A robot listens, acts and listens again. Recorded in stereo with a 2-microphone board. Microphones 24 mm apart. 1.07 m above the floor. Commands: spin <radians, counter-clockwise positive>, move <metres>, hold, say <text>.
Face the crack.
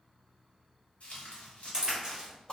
spin -0.52
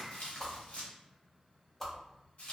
hold
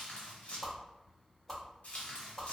say I heard a crack, but can't make it out now. It was about straight ahead or 120° right.